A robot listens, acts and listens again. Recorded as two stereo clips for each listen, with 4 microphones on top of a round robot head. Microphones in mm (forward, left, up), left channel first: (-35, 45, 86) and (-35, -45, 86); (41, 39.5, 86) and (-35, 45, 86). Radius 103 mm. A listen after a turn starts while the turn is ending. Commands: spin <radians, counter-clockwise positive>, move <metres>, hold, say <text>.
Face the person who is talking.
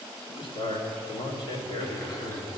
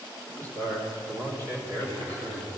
spin 2.44
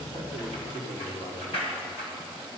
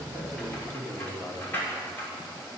spin 1.05
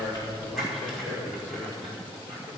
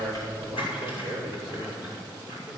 spin 0.26
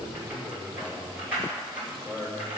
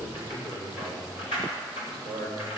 say Facing the man speaking, 2 to 4 m away.